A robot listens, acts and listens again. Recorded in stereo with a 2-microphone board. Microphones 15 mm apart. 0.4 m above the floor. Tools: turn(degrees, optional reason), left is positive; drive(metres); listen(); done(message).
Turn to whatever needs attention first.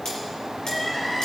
turn(degrees=30)
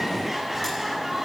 turn(degrees=-25, reason="So it is at 25° right.")
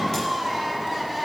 turn(degrees=-10, reason="The crying is now 10° right.")
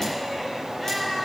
done("Facing the crying, over 4 m away.")